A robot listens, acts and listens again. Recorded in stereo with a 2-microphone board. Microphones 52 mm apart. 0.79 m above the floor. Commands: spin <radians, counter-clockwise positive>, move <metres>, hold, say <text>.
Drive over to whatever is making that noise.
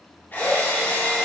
spin 0.70
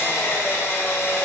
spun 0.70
spin 1.66
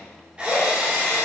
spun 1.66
spin -0.44
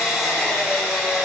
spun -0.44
move 1.0
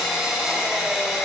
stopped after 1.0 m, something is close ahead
spin -0.17
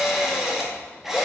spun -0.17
say I am next to the drill.